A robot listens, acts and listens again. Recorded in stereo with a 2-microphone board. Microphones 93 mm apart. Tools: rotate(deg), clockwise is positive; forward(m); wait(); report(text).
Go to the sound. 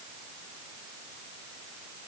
wait()
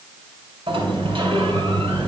rotate(70)
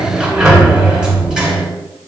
forward(1.0)
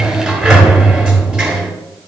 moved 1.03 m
rotate(10)
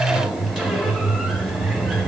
forward(1.0)
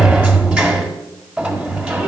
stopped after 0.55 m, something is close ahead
rotate(10)
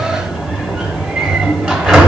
report("I am next to the sliding door.")